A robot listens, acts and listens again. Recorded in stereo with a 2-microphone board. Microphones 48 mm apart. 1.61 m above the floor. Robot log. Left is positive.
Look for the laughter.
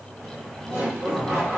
note: The laughter: about 50° right or 130° right.
cmd yaw -50
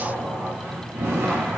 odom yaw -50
note: So it is at 80° right.
cmd yaw -80
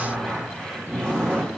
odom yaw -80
note: The laughter is now 20° left.
cmd yaw +20
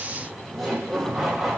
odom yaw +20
end: Facing the laughter.